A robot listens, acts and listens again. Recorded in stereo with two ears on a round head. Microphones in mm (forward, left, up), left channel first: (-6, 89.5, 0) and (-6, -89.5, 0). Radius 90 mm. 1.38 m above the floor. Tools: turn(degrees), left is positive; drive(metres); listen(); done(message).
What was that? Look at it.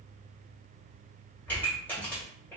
turn(degrees=30)
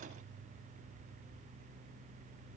listen()
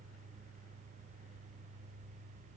done("I heard a pop, but can't make it out now. It was about 20° right or 140° left.")